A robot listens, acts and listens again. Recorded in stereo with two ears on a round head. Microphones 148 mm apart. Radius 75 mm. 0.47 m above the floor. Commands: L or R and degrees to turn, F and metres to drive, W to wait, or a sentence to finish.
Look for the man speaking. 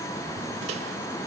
W
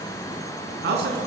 R90
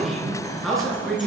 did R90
Found it: a man speaking, straight ahead.